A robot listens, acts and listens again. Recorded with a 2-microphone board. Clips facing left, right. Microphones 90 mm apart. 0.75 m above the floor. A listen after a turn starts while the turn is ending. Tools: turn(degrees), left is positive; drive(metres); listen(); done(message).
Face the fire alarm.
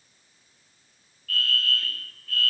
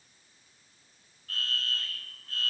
turn(degrees=-25)
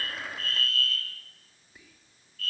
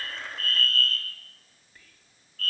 turn(degrees=-125)
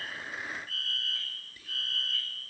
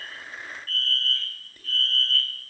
turn(degrees=10)
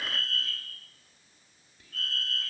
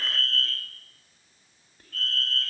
done("Facing the fire alarm.")